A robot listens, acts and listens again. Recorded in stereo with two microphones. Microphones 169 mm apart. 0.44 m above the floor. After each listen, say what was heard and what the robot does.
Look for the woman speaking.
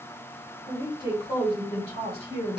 The woman speaking: about 40° left or 140° left. Turn 40° left.
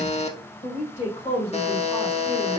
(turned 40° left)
The woman speaking: about 40° left or 140° left. Turn 40° left.
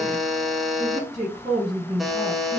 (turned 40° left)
So it is at 30° right. Turn 30° right.
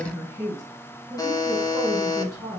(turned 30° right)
The woman speaking is now 10° right. Turn 10° right.
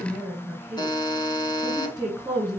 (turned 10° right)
Found it: a woman speaking, straight ahead, 2 to 4 m away.